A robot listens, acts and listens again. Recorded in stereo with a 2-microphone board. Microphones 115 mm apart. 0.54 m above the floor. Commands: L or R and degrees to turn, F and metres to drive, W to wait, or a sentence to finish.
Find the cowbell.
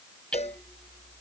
L70
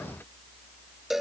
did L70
Facing the cowbell.